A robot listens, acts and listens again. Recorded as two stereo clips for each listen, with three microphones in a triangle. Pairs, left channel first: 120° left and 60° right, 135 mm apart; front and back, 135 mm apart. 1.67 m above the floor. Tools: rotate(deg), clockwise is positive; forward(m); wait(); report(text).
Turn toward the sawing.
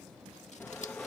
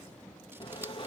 rotate(-45)
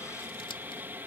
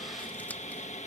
rotate(-15)
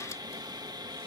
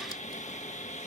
report("Found it: sawing, straight ahead.")